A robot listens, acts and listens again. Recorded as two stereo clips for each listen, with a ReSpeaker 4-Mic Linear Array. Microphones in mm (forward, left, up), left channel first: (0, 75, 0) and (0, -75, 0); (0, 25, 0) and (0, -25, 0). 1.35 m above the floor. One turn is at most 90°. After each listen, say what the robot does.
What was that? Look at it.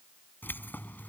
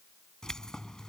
Turn 30° left.
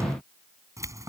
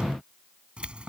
Turn 20° right.
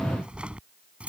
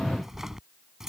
Turn 10° right.
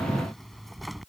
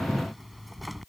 Found it: keys jangling, straight ahead.